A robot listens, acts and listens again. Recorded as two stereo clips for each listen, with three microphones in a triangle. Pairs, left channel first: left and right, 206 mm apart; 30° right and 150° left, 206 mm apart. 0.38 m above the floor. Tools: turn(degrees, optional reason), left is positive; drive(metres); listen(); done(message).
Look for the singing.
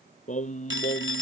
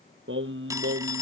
turn(degrees=145, reason="The singing: 145° left.")
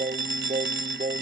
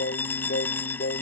turn(degrees=-40, reason="The singing is now 40° right.")
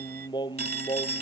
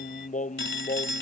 turn(degrees=20, reason="The singing is now 20° left.")
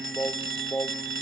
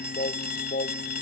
turn(degrees=10, reason="The singing is now 10° left.")
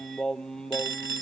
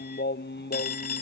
done("Facing the singing.")